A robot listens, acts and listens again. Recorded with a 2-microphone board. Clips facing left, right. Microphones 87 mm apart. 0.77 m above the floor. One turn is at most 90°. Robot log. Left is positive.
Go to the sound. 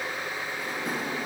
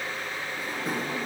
cmd yaw -30
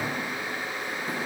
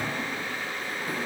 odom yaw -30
note: So it is at 25° left.
cmd yaw +25
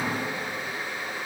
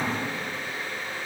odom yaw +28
cmd idle
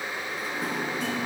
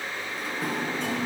cmd fwd 1.0
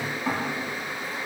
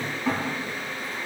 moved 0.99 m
cmd fwd 1.0
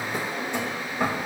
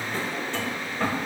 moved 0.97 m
note: The drawer is now 15° left.
cmd yaw +15
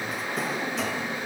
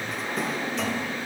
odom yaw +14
cmd fwd 1.0
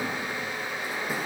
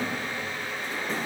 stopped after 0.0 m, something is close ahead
note: The drawer is now 10° left.
cmd yaw +10
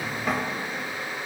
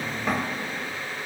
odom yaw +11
end: I am next to the drawer.